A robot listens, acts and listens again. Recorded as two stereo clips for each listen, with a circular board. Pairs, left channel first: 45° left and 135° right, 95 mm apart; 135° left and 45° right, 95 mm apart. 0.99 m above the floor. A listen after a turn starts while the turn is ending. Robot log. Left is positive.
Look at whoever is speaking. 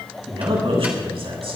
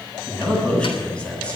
note: The man speaking: 150° right.
cmd yaw -150
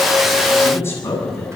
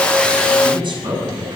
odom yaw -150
note: The man speaking is now 15° right.
cmd yaw -15
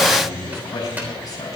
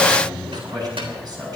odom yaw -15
end: Facing the man speaking.